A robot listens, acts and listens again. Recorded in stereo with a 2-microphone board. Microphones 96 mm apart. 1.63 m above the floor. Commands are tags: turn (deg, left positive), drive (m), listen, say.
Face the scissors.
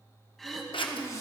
<turn deg="65"/>
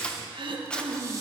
<turn deg="10"/>
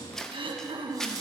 <say>Found it: scissors, straight ahead.</say>